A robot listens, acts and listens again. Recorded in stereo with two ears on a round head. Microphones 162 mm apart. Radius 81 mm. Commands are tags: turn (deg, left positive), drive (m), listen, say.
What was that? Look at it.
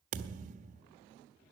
<turn deg="-45"/>
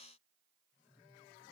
<listen/>
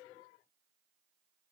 <say>I heard a thud, but can't make it out now. It was about straight ahead or 90° right.</say>